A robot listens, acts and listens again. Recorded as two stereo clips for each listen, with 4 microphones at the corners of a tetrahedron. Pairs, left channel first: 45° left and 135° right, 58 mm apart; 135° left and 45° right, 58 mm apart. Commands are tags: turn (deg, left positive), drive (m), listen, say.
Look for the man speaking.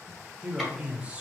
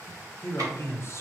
<turn deg="160"/>
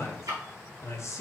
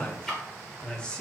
<turn deg="65"/>
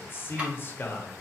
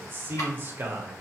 <say>Facing the man speaking, under 1 m away.</say>